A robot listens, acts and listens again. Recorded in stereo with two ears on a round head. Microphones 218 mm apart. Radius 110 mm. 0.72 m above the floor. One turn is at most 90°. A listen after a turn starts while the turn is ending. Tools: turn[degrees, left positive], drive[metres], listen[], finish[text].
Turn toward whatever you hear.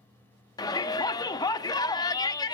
Thought: The shout: about 15° left or 165° left.
Action: turn[15]
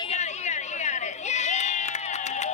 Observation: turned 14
Thought: So it is at 150° left.
Action: turn[90]
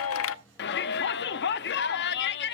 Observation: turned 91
Thought: The shout is now 55° left.
Action: turn[55]
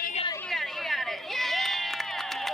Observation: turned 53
Action: finish[Found it: a shout, straight ahead.]